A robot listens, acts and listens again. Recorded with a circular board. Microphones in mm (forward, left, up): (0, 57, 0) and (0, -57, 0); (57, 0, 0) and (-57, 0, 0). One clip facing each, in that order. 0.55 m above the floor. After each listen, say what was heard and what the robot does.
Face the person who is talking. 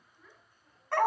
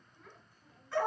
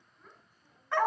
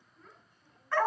The child speaking: 85° right. Turn 85° right.
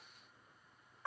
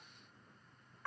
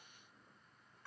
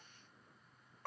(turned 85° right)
Keep listening.
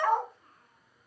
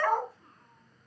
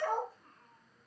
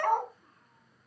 Found it: a child speaking, straight ahead.